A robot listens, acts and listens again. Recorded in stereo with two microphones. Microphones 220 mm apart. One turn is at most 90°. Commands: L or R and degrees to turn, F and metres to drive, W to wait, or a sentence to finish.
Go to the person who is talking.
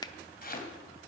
W
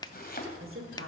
R60
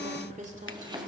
R35
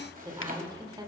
R20
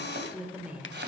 F1.0
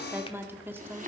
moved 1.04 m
R15
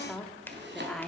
F1.0
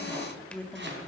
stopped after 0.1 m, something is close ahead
L10
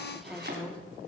Arrived at the woman speaking, straight ahead.